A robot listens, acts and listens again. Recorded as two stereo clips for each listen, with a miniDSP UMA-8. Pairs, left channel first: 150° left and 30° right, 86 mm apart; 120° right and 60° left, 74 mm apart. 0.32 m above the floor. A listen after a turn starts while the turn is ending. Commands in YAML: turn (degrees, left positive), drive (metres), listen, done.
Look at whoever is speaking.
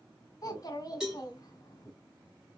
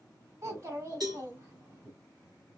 turn: 105
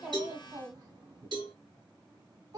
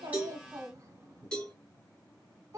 turn: 10
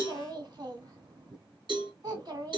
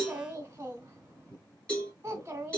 done: "Facing the child speaking."